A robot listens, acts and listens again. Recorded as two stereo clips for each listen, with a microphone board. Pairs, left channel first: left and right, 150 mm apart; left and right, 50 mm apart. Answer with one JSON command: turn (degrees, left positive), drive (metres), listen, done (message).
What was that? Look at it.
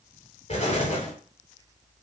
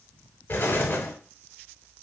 {"turn": 50}
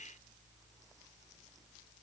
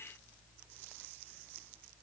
{"listen": true}
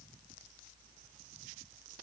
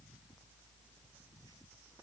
{"done": "I heard an explosion, but can't make it out now. It was about straight ahead or 80° left."}